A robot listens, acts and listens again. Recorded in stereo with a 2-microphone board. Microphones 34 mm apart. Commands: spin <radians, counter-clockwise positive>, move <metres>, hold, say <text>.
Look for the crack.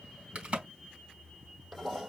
spin -0.70
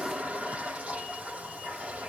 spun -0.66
hold
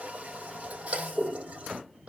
say I heard a crack, but can't make it out now. It was about straight ahead or 105° right.